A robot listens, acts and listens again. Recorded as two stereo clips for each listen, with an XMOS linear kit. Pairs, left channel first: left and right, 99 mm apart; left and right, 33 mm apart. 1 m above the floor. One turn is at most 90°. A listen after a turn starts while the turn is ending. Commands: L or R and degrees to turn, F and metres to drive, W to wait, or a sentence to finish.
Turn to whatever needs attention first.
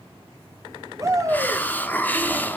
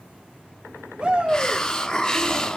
R30
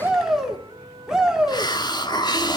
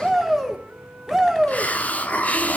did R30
Found it: a shout, straight ahead.